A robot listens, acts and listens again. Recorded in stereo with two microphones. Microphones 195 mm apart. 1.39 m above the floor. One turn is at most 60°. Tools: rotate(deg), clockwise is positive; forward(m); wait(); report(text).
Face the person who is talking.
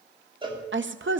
rotate(60)
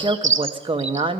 rotate(25)
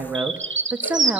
rotate(10)
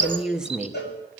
report("Found it: a woman speaking, straight ahead.")